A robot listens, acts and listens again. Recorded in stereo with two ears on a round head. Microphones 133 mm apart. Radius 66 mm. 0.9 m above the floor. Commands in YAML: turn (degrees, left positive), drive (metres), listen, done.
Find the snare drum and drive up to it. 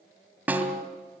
turn: -30
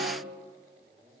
listen: true
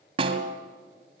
turn: -140
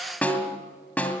turn: 10
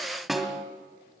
drive: 1.0
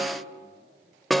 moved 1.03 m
drive: 1.0
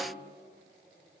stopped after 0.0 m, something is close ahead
listen: true
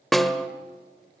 done: "Arrived at the snare drum, straight ahead."